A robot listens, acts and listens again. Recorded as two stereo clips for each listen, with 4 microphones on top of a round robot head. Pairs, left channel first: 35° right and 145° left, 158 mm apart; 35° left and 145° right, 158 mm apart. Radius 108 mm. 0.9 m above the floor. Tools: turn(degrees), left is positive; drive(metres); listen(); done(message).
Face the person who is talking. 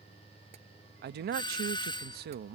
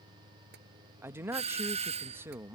turn(degrees=140)
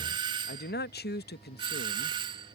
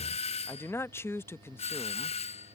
turn(degrees=-40)
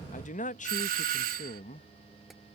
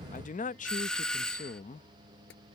done("Found it: a man speaking, straight ahead.")